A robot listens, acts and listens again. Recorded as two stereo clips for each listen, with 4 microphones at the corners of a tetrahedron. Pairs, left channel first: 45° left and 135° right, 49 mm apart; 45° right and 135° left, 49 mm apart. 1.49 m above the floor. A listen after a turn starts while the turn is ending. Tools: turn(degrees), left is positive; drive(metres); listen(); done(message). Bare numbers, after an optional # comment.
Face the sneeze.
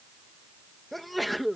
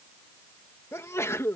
# The sneeze: 45° right.
turn(-45)
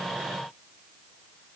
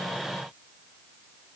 done("Facing where the sneeze came from. I can't hear it now.")